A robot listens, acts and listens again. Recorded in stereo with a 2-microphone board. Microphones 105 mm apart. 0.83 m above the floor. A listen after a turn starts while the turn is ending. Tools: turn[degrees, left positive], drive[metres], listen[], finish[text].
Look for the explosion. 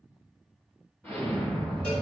Thought: The explosion: about 15° left or 165° left.
Action: turn[15]
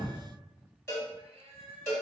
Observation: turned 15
Action: listen[]
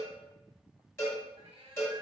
Action: finish[I heard an explosion, but can't make it out now. It was about straight ahead or 150° left.]